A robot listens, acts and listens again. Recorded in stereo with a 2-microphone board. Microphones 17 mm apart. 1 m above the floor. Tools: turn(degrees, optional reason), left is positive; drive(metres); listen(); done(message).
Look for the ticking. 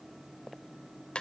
listen()
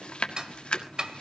turn(degrees=-45, reason="The ticking: about 45° right or 135° right.")
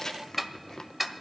done("Facing the ticking, 1 to 2 m away.")